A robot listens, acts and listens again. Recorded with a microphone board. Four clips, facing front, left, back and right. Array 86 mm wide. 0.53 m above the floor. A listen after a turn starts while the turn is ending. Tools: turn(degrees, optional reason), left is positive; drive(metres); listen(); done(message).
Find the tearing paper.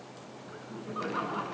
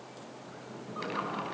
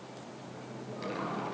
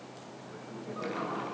listen()
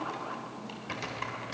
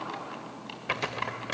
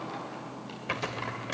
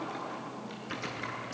turn(degrees=110, reason="The tearing paper: 110° left.")
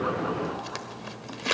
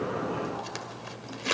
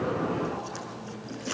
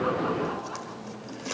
turn(degrees=30, reason="The tearing paper is now 30° left.")
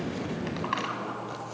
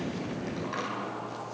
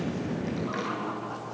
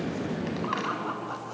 listen()
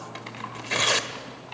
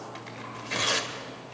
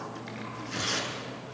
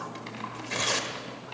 done("Found it: tearing paper, straight ahead, 1 to 2 m away.")